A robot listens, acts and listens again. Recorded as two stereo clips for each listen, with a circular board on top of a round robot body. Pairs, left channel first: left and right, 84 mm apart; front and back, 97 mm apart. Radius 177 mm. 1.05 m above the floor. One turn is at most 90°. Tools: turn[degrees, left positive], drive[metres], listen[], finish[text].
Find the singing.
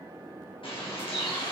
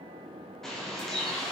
Action: listen[]
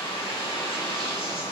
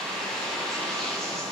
Action: listen[]
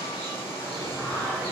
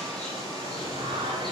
Thought: The singing: 165° left.
Action: turn[90]
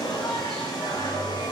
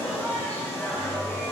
Thought: The singing is now 75° left.
Action: turn[75]
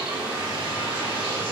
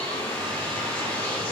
Action: listen[]
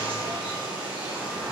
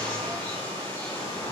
Action: listen[]
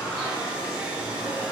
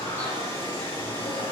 Action: finish[Facing the singing.]